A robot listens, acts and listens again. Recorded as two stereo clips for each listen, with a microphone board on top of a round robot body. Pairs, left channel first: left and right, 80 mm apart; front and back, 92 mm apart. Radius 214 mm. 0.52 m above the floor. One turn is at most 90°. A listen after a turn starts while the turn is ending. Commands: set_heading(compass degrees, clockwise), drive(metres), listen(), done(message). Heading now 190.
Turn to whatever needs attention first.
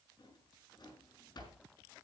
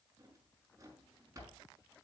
listen()
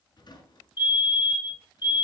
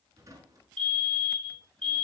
set_heading(110)
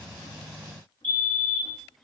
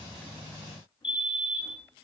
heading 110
set_heading(95)
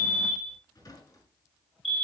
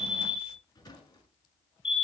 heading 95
done("Found it: a fire alarm, straight ahead.")